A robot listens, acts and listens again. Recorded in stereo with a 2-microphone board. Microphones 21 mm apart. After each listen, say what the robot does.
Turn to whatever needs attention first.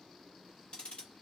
Keep listening.
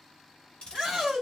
Turn 30° right.
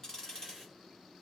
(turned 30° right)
Keep listening.
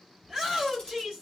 Found it: a shout, straight ahead, 1 to 2 m away.